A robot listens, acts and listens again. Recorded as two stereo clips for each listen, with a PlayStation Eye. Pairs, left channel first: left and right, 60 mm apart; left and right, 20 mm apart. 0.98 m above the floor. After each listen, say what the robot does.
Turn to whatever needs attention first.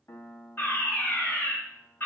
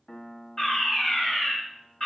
Turn 35° left.
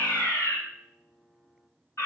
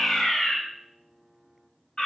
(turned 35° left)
Turn 105° left.
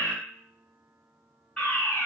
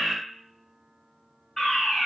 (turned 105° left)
Turn 15° left.
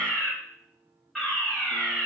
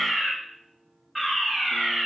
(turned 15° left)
Facing the fire alarm.